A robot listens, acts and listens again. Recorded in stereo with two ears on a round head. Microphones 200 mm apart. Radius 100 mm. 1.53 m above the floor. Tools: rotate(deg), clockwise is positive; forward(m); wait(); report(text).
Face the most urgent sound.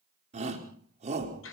rotate(30)
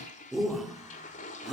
report("Found it: a shout, straight ahead.")